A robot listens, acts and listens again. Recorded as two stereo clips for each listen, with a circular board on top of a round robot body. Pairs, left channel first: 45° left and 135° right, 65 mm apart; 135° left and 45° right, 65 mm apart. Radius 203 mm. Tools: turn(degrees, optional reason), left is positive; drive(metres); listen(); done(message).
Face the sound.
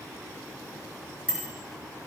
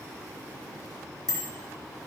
turn(degrees=-60, reason="The bicycle bell: 60° right.")
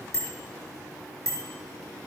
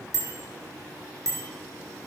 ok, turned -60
done("Facing the bicycle bell, over 4 m away.")